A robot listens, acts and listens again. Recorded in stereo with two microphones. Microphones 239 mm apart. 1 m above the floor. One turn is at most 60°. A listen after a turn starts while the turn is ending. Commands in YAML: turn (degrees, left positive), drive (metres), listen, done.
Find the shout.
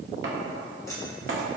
listen: true
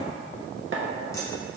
listen: true
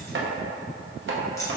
done: "I can't make out a shout to turn to."